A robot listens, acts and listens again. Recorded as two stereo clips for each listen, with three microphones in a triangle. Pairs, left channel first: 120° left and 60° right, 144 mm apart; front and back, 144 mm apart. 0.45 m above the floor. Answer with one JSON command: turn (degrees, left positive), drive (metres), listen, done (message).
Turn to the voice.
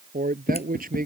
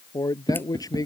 {"turn": -65}
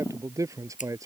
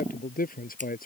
{"turn": 10}
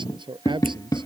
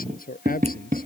{"done": "Facing the man speaking."}